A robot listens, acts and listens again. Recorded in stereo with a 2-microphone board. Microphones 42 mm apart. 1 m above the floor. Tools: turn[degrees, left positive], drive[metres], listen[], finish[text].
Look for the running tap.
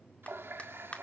Thought: The running tap: about 70° right or 110° right.
Action: turn[-70]
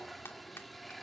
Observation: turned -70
Action: finish[Facing the running tap.]